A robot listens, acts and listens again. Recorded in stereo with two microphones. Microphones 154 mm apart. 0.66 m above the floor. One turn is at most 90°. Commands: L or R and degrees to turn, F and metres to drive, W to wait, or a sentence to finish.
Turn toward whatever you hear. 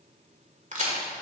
R55
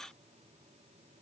W
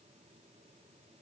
I heard a crack, but can't make it out now. It was about straight ahead or 70° right.